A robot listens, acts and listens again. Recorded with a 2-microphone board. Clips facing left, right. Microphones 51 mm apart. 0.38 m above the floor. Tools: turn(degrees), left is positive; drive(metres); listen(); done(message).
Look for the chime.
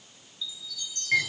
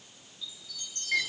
turn(degrees=-45)
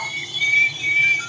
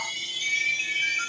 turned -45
turn(degrees=-95)
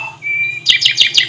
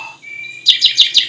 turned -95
listen()
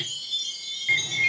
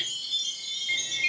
turn(degrees=-25)
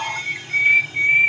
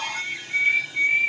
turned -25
listen()
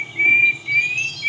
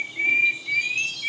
listen()
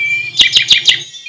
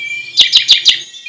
done("Found it: a chime, straight ahead, over 4 m away.")